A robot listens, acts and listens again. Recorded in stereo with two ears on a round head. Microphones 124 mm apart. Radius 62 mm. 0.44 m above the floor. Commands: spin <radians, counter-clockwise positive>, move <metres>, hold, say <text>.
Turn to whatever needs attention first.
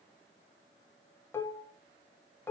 hold
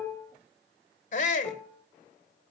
spin 1.05
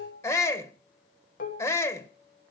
spin 0.44
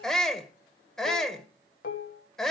say Found it: a shout, straight ahead.